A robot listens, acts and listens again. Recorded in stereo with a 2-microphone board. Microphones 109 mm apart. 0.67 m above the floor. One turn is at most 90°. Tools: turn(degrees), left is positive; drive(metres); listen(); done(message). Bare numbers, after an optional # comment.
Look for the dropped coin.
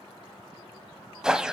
listen()
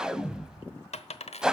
turn(90)
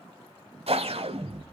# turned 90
done("Facing where the dropped coin came from. I can't hear it now.")